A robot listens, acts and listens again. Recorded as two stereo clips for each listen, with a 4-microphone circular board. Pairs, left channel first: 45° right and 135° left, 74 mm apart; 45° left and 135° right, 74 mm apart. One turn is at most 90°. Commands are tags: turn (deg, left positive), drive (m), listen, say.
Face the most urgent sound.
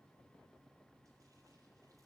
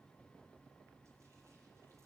<listen/>
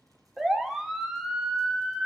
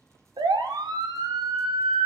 <turn deg="-90"/>
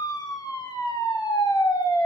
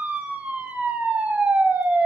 <turn deg="-70"/>
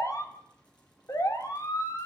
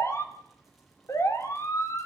<say>Found it: a siren, straight ahead, 2 to 4 m away.</say>